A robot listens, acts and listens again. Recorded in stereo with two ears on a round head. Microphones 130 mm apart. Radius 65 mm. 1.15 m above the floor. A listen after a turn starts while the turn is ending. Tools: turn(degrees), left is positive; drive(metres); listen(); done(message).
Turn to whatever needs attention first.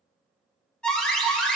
turn(degrees=30)
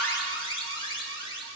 turn(degrees=145)
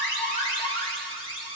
turn(degrees=35)
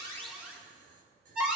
done("Facing the alarm, 2 to 4 m away.")